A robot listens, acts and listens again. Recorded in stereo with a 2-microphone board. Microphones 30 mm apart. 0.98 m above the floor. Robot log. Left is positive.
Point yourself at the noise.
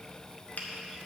cmd yaw +90
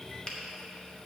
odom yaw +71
note: So it is at 30° left.
cmd yaw +30
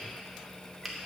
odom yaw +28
end: Found it: a finger snap, straight ahead.